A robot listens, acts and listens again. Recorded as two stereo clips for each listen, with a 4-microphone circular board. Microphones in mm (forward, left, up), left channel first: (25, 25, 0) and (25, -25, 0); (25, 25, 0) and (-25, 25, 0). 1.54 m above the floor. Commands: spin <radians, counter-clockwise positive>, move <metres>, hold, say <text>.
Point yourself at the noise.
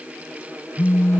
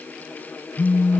spin 0.96
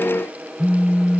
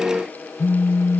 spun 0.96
spin -0.26
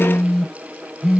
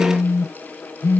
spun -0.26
say Facing the phone buzzing.